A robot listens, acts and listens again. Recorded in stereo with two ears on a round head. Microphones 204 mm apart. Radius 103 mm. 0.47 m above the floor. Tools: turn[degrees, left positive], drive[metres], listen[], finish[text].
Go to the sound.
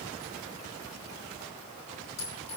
Thought: The clink: about 30° left or 150° left.
Action: turn[30]
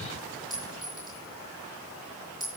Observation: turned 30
Action: drive[1.0]
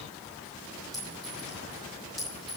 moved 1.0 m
Action: drive[1.0]
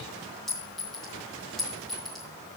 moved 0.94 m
Action: drive[1.0]
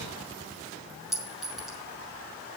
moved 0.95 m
Action: drive[1.0]
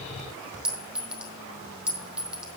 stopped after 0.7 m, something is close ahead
Action: finish[Arrived at the clink, straight ahead.]